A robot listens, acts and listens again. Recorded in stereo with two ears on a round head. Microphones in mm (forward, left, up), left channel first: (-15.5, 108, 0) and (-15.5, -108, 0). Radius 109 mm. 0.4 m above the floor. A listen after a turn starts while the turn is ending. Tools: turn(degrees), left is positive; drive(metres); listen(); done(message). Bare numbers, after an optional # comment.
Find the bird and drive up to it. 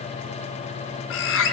# The bird: about 55° left or 125° left.
turn(55)
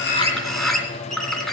drive(1.0)
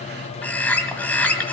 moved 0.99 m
drive(1.0)
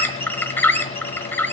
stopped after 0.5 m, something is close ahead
# The bird is now 10° left.
turn(10)
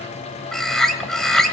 done("Arrived at the bird, straight ahead.")